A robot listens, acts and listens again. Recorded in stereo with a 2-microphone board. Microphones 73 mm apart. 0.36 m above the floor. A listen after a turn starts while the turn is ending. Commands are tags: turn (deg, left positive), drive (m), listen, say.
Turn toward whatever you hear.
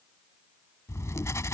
<turn deg="45"/>
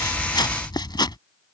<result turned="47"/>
<turn deg="90"/>
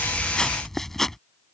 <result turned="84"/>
<say>Found it: writing, straight ahead.</say>